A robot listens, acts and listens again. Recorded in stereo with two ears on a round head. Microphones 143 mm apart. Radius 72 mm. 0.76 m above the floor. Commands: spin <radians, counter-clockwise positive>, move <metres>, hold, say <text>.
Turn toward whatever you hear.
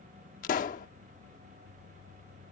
spin 0.87
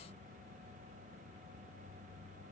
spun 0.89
hold
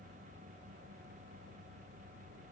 say I heard a pop, but can't make it out now. It was about straight ahead or 80° left.